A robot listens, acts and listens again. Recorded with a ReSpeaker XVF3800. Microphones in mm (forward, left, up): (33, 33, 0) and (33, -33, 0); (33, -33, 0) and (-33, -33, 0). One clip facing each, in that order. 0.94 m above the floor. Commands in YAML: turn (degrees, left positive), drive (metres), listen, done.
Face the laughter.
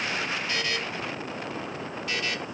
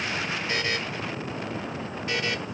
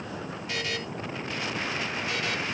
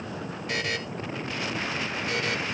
listen: true
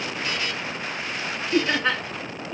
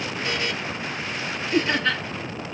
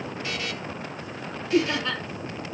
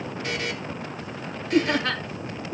turn: 165
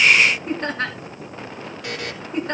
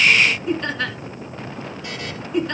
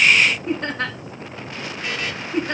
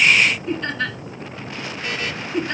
turn: 45
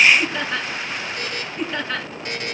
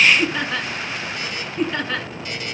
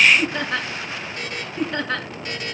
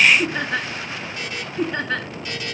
done: "Facing the laughter, 2 to 4 m away."